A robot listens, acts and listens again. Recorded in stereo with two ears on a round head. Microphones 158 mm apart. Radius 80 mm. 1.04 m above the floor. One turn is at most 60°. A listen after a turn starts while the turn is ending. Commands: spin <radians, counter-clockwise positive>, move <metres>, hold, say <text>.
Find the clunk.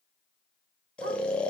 hold
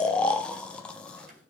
spin -0.87
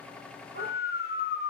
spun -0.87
hold
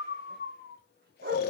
say I heard a clunk, but can't make it out now. It was about straight ahead or 80° right.